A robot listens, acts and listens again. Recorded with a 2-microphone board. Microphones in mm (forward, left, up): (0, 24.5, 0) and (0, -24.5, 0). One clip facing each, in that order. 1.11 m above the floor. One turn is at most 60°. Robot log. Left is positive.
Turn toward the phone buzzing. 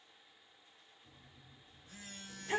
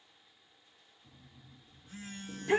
note: The phone buzzing: about 35° right or 145° right.
cmd yaw -35
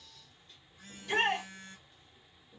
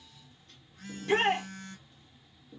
note: So it is at 110° right.
cmd yaw -60
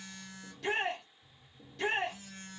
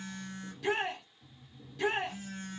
note: The phone buzzing is now 55° right.
cmd yaw -55
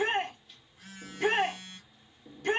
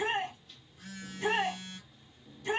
note: The phone buzzing is now 10° left.
cmd yaw +10
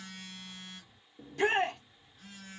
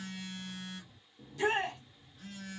end: Facing the phone buzzing.